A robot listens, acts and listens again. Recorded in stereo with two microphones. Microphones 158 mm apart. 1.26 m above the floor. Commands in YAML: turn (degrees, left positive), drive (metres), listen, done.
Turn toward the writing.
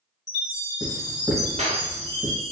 turn: 30
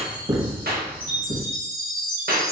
turn: -30
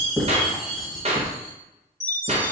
done: "Found it: writing, straight ahead, 1 to 2 m away."